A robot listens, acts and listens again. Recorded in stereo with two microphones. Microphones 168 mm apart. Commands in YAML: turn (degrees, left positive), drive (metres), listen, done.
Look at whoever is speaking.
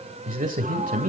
turn: -60
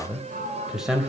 done: "Found it: a man speaking, straight ahead, 2 to 4 m away."